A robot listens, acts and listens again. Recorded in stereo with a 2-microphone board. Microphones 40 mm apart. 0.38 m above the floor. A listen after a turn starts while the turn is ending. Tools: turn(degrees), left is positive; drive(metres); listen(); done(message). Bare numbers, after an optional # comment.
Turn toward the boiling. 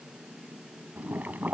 # The boiling: about 45° right or 135° right.
turn(-45)
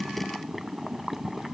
done("Facing the boiling.")